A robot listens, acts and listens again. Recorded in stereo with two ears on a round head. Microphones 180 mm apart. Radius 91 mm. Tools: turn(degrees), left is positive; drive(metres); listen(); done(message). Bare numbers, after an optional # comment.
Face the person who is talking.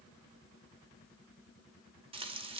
listen()
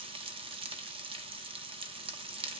listen()
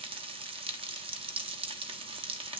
done("I can't make out anyone speaking to turn to.")